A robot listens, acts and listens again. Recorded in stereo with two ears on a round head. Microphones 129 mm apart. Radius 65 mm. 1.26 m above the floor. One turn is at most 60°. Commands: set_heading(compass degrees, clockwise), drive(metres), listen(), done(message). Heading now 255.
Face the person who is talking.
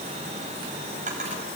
listen()
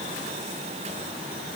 listen()
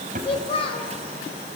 set_heading(215)
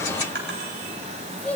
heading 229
set_heading(219)
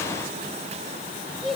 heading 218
done("Facing the child speaking, 2 to 4 m away.")